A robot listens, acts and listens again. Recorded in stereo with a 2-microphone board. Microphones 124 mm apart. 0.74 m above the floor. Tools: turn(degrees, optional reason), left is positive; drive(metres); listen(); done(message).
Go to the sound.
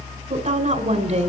turn(degrees=-65, reason="The woman speaking: about 65° right or 115° right.")
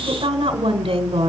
turn(degrees=-45, reason="So it is at 45° right.")
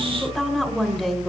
drive(metres=1.0)
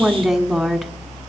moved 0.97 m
drive(metres=1.0)
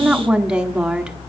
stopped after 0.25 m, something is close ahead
done("Arrived at the woman speaking, straight ahead.")